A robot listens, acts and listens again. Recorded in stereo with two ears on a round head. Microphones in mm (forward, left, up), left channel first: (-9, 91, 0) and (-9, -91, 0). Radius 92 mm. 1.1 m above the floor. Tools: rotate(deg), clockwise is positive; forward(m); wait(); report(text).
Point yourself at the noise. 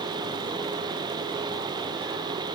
wait()
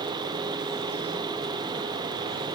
wait()
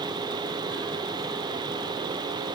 report("I can't make out anything to turn to.")